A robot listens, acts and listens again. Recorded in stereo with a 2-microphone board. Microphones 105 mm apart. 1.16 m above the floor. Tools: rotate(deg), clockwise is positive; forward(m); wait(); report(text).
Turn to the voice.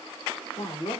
rotate(-90)
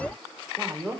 rotate(-10)
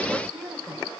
report("Found it: a woman speaking, straight ahead.")